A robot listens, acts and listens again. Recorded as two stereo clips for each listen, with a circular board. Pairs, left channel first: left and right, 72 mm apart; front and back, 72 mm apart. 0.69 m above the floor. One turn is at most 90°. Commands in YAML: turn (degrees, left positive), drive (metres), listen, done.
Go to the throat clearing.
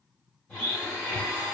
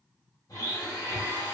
listen: true
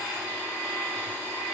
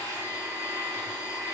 listen: true
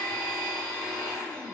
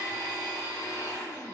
done: "I can't make out throat clearing, only a blender."